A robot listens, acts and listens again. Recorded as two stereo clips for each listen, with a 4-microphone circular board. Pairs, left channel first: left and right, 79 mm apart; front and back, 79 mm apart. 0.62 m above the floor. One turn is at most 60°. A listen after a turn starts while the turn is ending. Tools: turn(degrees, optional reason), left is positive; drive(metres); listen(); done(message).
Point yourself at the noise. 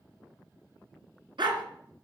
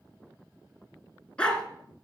turn(degrees=-60, reason="The dog barking: 80° right.")
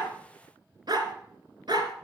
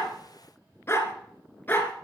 turn(degrees=-60, reason="The dog barking is now 65° right.")
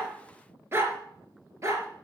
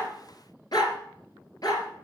turn(degrees=-40, reason="The dog barking is now 40° right.")
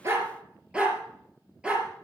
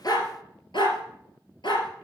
turn(degrees=-10, reason="The dog barking is now 10° right.")
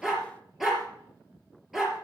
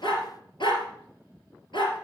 done("Facing the dog barking.")